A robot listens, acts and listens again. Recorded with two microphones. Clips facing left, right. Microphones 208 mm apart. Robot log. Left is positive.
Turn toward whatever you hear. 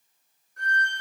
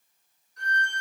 note: The violin: about 55° left or 125° left.
cmd yaw +55
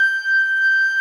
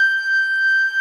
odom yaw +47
note: So it is at 35° left.
cmd yaw +35
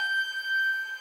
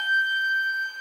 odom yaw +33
end: Found it: a violin, straight ahead.